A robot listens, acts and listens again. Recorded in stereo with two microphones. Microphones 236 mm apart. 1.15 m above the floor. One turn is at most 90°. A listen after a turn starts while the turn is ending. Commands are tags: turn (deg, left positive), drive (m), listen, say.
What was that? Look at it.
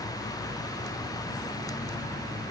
<listen/>
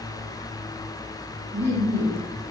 <turn deg="-70"/>
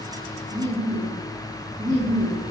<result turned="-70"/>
<turn deg="-35"/>
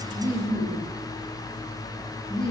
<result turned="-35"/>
<say>Facing the laughter, 1 to 2 m away.</say>